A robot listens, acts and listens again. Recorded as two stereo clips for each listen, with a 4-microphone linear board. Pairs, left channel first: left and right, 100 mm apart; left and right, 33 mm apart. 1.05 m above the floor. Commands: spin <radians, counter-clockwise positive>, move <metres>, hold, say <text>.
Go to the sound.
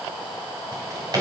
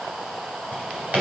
spin -0.70
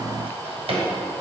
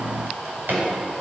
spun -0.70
spin -1.66
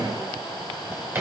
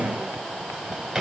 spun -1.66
spin -0.44
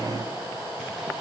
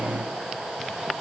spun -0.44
spin -0.17
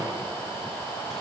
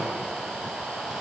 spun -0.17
hold
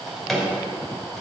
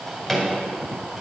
move 1.0
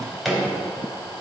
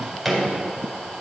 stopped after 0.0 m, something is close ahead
say Something is in my way. I am facing the drawer but have not reached it.